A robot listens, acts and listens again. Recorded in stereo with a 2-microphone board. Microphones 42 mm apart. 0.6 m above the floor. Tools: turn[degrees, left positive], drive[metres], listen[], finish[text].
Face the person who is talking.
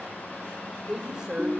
Thought: The woman speaking: about 15° right or 165° right.
Action: turn[-15]
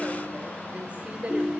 Thought: So it is at 150° right.
Action: turn[-150]
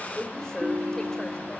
Thought: The woman speaking is now 15° left.
Action: turn[15]
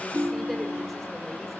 Action: listen[]
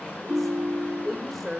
Action: finish[Facing the woman speaking, 2 to 4 m away.]